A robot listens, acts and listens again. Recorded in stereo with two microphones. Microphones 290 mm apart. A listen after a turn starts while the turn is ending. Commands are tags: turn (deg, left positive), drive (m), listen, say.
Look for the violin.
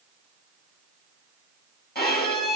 <turn deg="35"/>
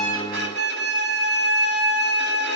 <turn deg="110"/>
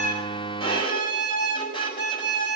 <turn deg="15"/>
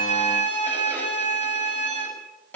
<say>Facing the violin.</say>